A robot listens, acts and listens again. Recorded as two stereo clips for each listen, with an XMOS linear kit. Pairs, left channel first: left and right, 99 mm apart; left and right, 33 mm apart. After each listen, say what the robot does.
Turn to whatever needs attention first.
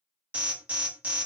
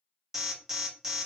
Turn 30° right.
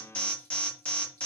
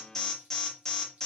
Turn 15° left.
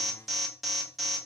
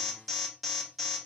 Facing the alarm.